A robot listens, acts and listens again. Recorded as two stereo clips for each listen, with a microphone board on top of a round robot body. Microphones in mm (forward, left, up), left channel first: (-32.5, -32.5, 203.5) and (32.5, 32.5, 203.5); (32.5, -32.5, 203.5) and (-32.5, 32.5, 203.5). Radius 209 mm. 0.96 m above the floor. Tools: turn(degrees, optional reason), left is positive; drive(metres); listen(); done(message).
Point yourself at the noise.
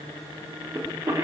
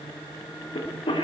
turn(degrees=-15, reason="The cough: 15° right.")
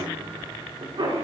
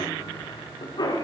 done("Found it: a cough, straight ahead.")